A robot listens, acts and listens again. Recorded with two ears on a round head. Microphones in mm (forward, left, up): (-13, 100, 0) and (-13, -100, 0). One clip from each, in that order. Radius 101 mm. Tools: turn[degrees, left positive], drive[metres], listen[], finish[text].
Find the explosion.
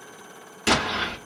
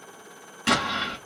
Thought: The explosion: about 20° left or 160° left.
Action: turn[20]
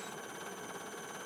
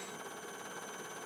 Action: listen[]
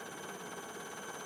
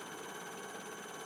Action: finish[I heard an explosion, but can't make it out now. It was about straight ahead or 140° left.]